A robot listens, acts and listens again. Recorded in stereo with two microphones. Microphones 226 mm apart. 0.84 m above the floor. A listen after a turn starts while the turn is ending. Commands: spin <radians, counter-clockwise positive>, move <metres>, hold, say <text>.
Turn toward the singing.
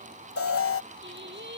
spin -0.87
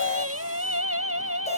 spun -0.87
spin -1.31
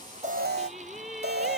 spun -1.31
say Found it: singing, straight ahead.